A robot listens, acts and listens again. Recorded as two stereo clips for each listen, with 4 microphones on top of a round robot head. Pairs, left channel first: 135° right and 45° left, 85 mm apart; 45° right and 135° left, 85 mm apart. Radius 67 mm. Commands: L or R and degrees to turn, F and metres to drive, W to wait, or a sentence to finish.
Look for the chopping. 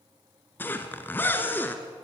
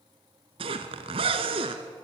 W
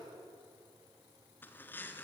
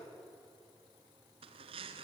W
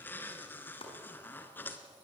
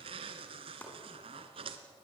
R115
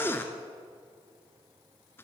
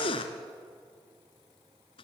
W
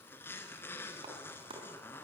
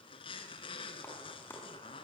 L20
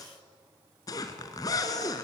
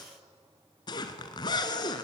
W
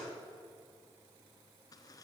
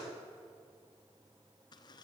W
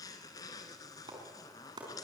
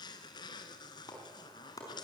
Facing the chopping, over 4 m away.